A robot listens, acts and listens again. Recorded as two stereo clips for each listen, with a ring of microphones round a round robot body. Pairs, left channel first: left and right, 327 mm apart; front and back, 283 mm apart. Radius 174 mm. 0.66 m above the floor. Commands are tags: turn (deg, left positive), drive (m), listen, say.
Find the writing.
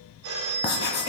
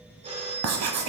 <turn deg="150"/>
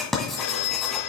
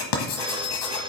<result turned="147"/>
<say>Facing the writing.</say>